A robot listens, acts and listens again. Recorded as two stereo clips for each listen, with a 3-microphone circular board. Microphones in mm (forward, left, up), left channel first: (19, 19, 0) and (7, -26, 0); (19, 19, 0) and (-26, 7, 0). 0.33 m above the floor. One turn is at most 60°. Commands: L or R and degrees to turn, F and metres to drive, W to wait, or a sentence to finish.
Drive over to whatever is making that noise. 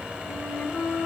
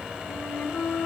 L40
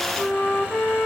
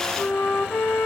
L30
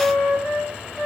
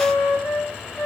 F1.0
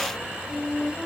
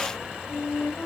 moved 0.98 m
F1.0
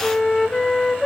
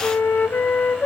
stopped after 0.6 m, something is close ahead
Arrived at the flute, straight ahead.